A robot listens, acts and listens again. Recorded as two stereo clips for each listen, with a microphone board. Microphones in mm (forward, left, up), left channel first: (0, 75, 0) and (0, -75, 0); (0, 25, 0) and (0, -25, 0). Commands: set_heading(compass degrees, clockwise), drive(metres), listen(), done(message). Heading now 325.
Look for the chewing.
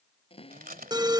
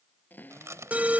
set_heading(55)
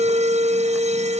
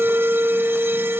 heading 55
listen()
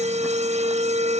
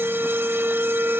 listen()
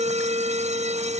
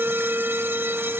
done("Facing where the chewing came from. I can't hear it now.")